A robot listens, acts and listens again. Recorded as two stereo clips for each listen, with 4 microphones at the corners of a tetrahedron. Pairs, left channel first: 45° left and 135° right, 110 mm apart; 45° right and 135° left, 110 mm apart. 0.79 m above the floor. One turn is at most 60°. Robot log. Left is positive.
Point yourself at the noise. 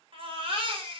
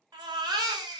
note: The baby crying: 175° right.
cmd yaw -60
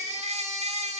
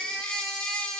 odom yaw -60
note: The baby crying is now 125° right.
cmd yaw -60
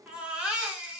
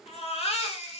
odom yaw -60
note: The baby crying is now 55° right.
cmd yaw -55
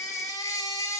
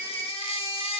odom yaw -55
note: The baby crying is now 15° right.
cmd yaw -15
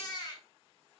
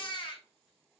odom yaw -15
end: Facing the baby crying, under 1 m away.